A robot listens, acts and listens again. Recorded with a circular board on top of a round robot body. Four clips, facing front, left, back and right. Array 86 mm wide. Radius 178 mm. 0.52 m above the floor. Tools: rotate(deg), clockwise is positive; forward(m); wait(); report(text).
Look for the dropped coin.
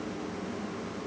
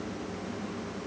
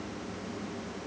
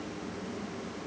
wait()
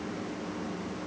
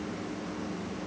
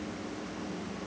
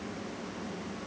wait()
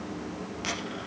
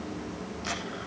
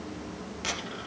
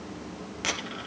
rotate(90)
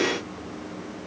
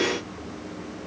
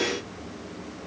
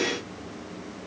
report("Facing where the dropped coin came from. I can't hear it now.")